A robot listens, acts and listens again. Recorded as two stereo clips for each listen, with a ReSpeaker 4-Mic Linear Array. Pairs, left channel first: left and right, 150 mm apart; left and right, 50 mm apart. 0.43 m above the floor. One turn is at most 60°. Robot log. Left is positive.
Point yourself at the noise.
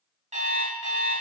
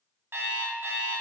note: The alarm clock: about 50° right or 130° right.
cmd yaw -50
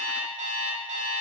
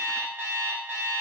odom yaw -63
note: So it is at 55° right.
cmd yaw -55
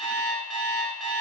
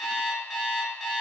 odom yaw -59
end: Found it: an alarm clock, straight ahead, 1 to 2 m away.